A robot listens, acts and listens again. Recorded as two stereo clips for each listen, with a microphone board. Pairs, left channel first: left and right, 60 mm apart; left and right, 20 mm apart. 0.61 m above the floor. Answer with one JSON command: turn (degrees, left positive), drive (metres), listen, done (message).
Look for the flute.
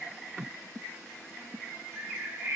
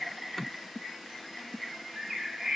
{"listen": true}
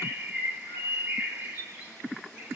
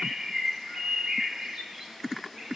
{"listen": true}
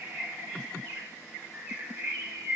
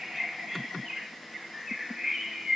{"done": "I can't make out a flute, only a bird."}